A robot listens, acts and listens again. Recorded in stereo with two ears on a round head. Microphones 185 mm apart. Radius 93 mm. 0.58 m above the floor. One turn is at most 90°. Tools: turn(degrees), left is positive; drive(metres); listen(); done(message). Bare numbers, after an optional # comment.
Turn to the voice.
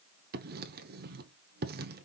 listen()
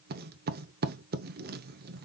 listen()
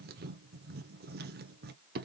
done("I can't make out anyone speaking to turn to.")